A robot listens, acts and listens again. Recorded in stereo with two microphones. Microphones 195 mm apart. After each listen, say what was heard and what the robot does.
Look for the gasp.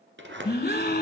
The gasp: about 55° left or 125° left. Turn 55° left.
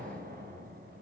Keep listening.
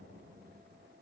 I heard a gasp, but can't make it out now. It was about straight ahead or 70° left.